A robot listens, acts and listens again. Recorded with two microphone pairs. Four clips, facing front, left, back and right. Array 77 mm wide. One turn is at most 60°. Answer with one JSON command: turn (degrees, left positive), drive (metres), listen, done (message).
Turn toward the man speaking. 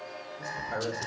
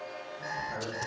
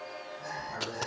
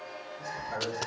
{"done": "Facing the man speaking."}